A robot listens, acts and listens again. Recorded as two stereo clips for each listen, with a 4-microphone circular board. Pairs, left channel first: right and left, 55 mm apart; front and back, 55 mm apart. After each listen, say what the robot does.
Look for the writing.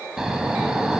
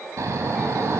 Keep listening.
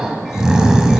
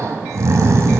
Keep listening.
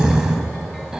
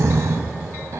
I can't make out writing, only snoring.